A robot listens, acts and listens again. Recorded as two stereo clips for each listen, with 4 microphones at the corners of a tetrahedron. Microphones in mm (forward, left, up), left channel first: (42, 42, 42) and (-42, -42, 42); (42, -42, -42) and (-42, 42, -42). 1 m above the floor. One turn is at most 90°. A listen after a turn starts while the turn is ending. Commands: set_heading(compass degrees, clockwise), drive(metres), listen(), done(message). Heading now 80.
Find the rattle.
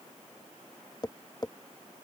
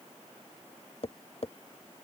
listen()
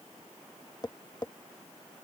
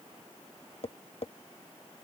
listen()
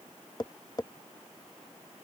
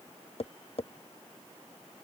done("I can't make out a rattle to turn to.")